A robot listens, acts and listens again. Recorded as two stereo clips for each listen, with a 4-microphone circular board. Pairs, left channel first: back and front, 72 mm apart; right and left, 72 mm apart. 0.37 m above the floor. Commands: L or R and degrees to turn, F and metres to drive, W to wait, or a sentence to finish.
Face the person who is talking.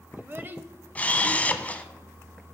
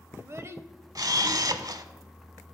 L50
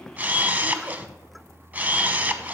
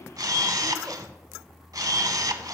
W
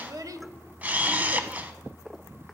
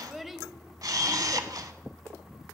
Facing the child speaking, 1 to 2 m away.